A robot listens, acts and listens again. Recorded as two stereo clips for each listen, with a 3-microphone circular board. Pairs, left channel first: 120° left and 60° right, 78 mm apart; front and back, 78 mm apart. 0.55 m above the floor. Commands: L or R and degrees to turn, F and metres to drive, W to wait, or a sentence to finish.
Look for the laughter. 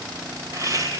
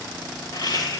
R20
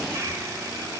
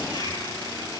R10
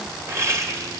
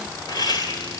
R15
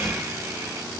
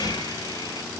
W
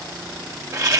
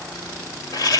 R25
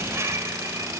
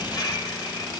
R10
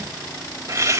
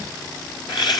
R10
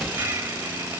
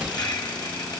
Found it: laughter, straight ahead, 2 to 4 m away.